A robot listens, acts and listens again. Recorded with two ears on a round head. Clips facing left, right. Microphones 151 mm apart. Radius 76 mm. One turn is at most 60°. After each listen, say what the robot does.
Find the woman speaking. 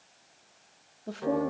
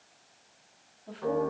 Turn 50° left.
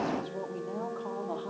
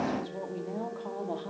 Turn 20° right.
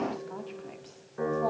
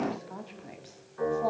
Found it: a woman speaking, straight ahead, 1 to 2 m away.